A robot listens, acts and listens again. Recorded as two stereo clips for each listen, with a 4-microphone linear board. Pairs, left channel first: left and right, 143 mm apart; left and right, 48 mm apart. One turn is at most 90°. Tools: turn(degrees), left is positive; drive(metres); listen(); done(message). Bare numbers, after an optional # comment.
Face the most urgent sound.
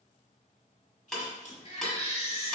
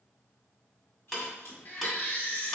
# The baby crying: about 45° left or 135° left.
turn(45)
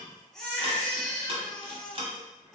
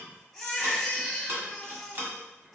done("Facing the baby crying.")